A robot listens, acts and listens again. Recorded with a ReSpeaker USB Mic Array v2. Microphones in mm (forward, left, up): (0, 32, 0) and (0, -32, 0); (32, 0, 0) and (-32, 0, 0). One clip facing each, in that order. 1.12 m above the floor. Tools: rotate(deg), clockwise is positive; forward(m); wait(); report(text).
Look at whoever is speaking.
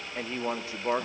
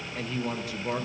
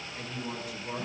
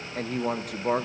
rotate(-150)
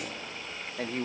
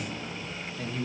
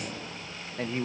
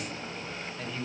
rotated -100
rotate(-50)
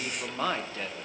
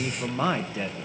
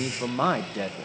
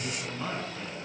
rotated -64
rotate(10)
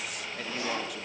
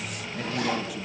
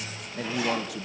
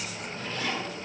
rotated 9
report("Facing the man speaking, 1 to 2 m away.")